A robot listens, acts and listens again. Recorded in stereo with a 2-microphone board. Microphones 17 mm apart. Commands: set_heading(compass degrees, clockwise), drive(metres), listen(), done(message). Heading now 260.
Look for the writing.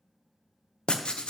set_heading(200)
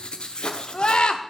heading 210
set_heading(150)
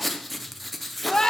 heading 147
done("Facing the writing, under 1 m away.")